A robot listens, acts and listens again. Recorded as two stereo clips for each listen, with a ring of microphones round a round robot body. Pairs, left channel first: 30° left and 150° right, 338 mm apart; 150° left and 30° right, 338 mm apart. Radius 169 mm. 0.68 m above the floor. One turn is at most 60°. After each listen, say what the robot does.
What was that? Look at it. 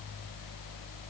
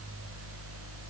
Keep listening.
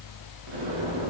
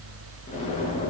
Turn 60° right.
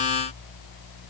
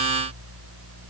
Turn 60° right.
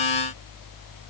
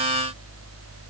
Turn 20° right.
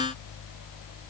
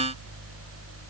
I heard an explosion from this way, but can't make it out now.